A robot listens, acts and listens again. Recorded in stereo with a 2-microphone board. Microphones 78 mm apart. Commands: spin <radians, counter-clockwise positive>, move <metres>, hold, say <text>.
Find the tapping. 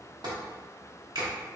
spin -1.22
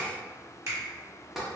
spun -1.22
say Found it: tapping, straight ahead, under 1 m away.